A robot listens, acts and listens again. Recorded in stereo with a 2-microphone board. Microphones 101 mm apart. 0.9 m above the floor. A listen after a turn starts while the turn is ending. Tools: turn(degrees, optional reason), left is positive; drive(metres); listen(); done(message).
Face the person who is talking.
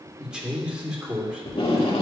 turn(degrees=-30)
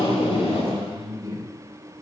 turn(degrees=-140, reason="So it is at 140° right.")
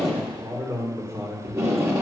turn(degrees=-30, reason="The man speaking is now 30° right.")
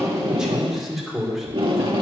done("Facing the man speaking, 2 to 4 m away.")